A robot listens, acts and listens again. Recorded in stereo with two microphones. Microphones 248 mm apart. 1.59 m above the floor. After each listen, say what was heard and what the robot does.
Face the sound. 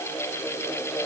Keep listening.
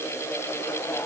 Keep listening.
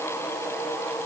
I can't make out anything to turn to.